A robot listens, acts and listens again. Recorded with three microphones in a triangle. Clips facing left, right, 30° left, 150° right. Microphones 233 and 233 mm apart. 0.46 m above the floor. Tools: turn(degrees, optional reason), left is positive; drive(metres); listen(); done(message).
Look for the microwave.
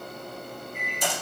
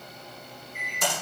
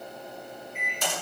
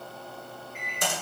turn(degrees=90, reason="The microwave: 90° left.")
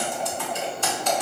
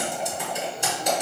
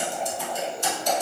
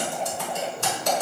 listen()
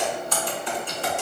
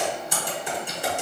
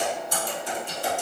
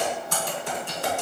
listen()
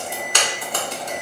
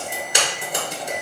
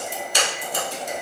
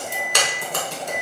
turn(degrees=35, reason="The microwave is now 35° left.")
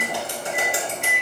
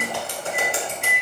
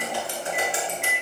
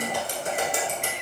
done("Found it: a microwave, straight ahead, 1 to 2 m away.")